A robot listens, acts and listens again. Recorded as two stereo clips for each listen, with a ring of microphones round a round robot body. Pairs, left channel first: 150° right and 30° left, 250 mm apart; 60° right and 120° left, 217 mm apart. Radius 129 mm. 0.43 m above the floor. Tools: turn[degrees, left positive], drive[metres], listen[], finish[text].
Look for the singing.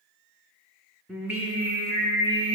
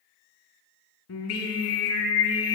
Thought: The singing: 40° right.
Action: turn[-40]
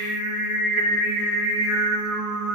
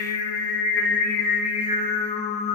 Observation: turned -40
Action: finish[Found it: singing, straight ahead.]